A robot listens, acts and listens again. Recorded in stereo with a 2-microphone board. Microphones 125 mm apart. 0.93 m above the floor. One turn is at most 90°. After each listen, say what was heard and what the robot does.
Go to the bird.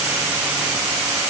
Keep listening.
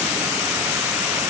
Keep listening.
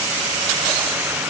I can't make out a bird to turn to.